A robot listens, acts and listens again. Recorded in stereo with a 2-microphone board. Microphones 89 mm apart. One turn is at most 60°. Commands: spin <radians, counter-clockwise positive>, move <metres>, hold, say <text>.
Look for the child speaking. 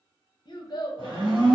spin 0.96
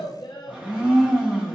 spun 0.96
spin 1.05
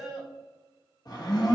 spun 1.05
say Facing the child speaking.